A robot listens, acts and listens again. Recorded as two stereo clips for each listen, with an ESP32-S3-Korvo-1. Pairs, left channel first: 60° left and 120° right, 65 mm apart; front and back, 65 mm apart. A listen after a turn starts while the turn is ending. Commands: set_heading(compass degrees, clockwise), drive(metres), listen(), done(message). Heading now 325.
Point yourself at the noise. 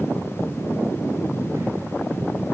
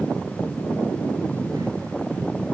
listen()
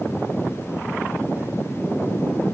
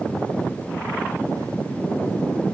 listen()
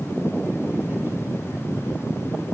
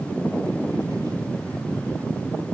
done("I can't make out anything to turn to.")